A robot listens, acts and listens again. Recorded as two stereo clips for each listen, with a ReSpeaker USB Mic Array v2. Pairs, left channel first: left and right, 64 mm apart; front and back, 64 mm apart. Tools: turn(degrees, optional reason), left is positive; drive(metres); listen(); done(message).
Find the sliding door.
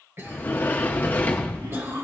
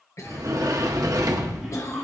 turn(degrees=150, reason="The sliding door: 150° left.")
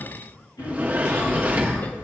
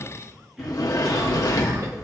turn(degrees=-25, reason="The sliding door is now 25° right.")
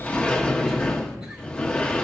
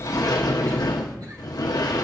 turn(degrees=15, reason="The sliding door is now 15° left.")
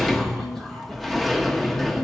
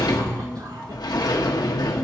done("Found it: a sliding door, straight ahead, 1 to 2 m away.")